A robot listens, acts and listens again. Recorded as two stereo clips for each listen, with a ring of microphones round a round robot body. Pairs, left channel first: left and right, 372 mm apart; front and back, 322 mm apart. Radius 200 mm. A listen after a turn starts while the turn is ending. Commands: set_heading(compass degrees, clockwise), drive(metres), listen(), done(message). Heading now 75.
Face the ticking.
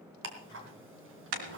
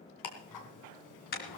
set_heading(105)
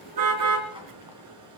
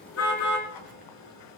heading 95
set_heading(105)
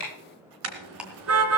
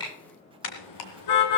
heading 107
done("Facing the ticking.")